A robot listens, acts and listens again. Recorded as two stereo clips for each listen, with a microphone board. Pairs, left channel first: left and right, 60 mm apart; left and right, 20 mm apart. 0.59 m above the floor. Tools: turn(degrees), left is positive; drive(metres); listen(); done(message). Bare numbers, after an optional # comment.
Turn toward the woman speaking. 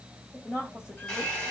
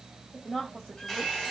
# The woman speaking: about 50° left or 130° left.
turn(50)
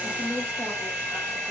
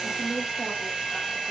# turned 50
done("Found it: a woman speaking, straight ahead.")